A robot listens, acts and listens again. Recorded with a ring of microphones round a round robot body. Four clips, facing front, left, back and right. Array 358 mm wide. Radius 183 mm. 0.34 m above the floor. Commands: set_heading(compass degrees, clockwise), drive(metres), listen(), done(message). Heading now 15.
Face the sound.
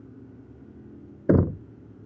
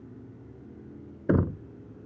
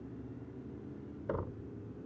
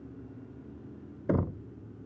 set_heading(0)
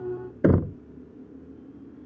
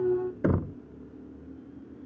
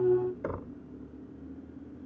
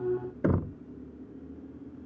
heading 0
done("Found it: knocking, straight ahead.")